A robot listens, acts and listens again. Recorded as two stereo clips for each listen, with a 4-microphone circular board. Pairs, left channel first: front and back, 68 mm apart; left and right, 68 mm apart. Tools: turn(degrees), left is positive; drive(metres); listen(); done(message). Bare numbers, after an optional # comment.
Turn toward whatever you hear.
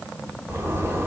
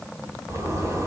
# The zipper: 130° right.
turn(-130)
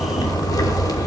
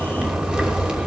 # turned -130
# The zipper is now 15° right.
turn(-15)
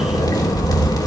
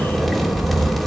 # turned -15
done("Found it: a zipper, straight ahead, 2 to 4 m away.")